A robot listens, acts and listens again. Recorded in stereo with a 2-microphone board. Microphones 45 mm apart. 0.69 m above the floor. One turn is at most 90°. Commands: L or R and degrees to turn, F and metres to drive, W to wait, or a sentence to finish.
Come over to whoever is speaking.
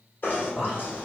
L30
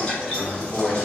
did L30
R20
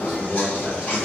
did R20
F1.0
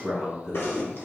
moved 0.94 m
R10
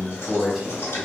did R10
F1.0
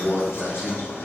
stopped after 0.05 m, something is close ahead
Arrived at the man speaking, straight ahead.